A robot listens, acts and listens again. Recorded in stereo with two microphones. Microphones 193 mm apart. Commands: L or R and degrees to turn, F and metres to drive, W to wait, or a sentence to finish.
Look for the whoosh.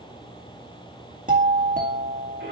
W
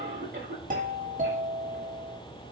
W
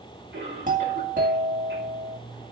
I can't make out a whoosh, only a cough and a doorbell.